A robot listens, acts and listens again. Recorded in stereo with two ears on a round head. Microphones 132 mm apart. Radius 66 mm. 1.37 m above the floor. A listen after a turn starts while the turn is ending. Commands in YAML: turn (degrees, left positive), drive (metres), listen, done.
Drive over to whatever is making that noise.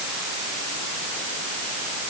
listen: true
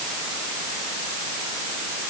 listen: true
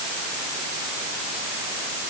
done: "I can't make out anything."